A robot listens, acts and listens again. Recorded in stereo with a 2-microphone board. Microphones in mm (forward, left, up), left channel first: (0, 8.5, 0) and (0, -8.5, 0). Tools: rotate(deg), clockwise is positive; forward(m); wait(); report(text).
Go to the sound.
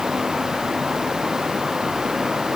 wait()
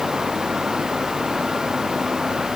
wait()
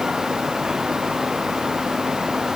report("I can't make out anything.")